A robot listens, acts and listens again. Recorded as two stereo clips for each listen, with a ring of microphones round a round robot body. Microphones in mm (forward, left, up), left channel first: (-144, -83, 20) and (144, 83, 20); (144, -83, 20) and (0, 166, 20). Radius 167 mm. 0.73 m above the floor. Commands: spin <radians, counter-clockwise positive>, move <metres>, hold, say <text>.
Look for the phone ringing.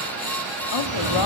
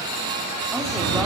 spin 1.57
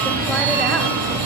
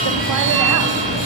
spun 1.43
say Found it: a phone ringing, straight ahead, over 4 m away.